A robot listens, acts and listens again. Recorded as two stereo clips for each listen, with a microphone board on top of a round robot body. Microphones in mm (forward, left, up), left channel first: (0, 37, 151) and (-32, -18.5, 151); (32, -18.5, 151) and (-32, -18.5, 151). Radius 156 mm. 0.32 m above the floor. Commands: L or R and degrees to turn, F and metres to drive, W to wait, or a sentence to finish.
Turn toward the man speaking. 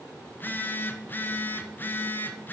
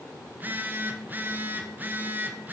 W
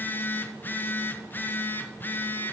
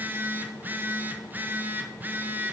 W
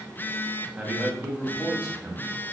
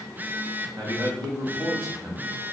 L170
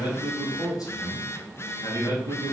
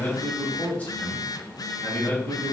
L65
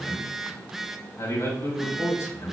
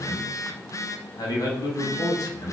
L15
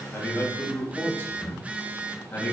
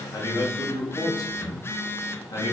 Facing the man speaking, 2 to 4 m away.